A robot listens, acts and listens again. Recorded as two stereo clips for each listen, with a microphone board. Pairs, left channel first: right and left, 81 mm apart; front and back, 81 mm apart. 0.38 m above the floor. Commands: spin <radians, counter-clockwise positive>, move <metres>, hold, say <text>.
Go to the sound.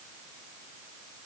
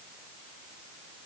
hold
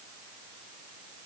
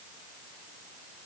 hold
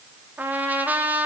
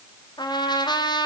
spin 0.35
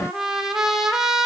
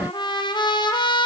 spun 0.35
move 1.0
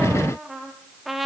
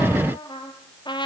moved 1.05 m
move 1.0
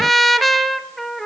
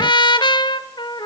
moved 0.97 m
move 1.0
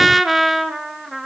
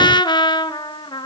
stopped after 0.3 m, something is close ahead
say Arrived at the trumpet, straight ahead.